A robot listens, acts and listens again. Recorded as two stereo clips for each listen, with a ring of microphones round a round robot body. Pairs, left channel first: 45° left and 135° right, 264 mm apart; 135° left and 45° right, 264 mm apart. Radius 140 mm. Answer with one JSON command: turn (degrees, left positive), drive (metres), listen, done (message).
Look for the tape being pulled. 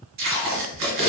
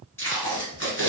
{"turn": -145}
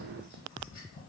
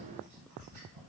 {"listen": true}
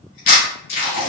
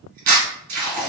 {"turn": -15}
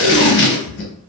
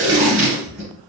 {"done": "Facing the tape being pulled."}